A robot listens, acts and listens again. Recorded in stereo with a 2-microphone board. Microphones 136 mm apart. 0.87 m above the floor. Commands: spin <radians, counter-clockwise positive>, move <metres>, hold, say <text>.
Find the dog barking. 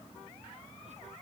hold
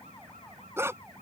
spin -0.35
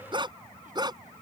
spin -0.61
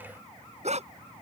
spin -2.09
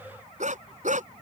spin -1.22
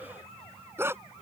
spin -0.35
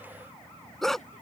say Facing the dog barking.